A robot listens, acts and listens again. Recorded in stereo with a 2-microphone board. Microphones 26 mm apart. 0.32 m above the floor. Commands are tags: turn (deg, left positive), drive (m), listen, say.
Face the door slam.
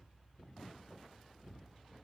<listen/>
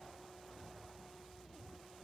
<listen/>
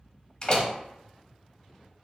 <turn deg="30"/>
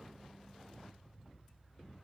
<listen/>
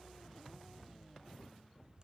<say>I heard a door slam, but can't make it out now. It was about straight ahead or 120° left.</say>